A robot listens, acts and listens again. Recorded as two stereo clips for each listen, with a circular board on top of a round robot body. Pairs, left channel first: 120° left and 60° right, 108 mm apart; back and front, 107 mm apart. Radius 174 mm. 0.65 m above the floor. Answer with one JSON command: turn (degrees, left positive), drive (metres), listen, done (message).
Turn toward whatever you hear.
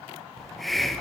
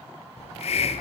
{"turn": -150}
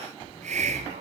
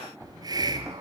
{"turn": -55}
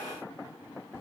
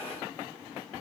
{"listen": true}
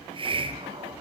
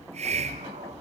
{"turn": -20}
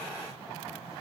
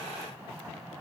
{"listen": true}
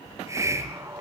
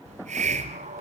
{"done": "Found it: a hiss, straight ahead, under 1 m away."}